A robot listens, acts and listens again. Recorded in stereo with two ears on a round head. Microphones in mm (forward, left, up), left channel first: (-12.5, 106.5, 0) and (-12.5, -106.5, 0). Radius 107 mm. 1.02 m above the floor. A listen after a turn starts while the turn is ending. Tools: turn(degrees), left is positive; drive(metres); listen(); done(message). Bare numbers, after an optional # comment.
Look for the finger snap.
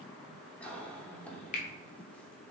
# The finger snap: about 30° left or 150° left.
turn(30)
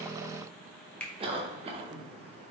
done("Found it: a finger snap, straight ahead.")